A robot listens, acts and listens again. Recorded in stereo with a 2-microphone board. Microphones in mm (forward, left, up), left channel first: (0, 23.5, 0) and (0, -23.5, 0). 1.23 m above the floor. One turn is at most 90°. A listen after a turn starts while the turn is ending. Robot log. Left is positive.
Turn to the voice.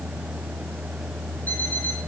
cmd idle
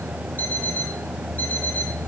cmd idle
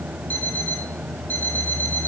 end: I can't make out anyone speaking, only an alarm clock.